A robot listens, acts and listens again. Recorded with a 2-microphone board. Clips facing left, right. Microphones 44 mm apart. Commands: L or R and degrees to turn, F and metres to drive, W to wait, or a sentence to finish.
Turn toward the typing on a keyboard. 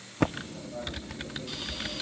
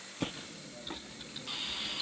L90
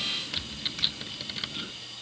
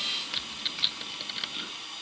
Found it: typing on a keyboard, straight ahead, under 1 m away.